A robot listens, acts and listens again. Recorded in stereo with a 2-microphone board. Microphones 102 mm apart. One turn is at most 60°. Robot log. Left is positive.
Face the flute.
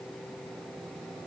cmd idle
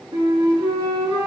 note: The flute: about 60° right or 120° right.
cmd yaw -60
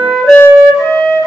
end: Found it: a flute, straight ahead.